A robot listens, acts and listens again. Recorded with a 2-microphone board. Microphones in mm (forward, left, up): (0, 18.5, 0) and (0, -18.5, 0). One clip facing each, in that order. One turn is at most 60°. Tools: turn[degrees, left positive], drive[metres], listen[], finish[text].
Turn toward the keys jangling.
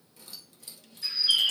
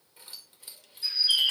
Thought: The keys jangling: about 20° right or 160° right.
Action: turn[-20]
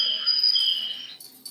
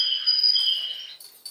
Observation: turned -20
Thought: The keys jangling: about 30° right or 150° right.
Action: turn[-30]
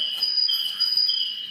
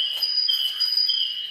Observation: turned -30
Action: listen[]
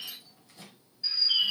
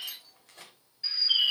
Thought: So it is at 125° right.
Action: turn[-60]
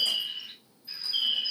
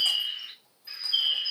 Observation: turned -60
Thought: Nothing new. It was at 65° right.
Action: turn[-60]
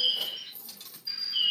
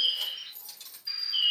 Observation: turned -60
Action: finish[Facing the keys jangling.]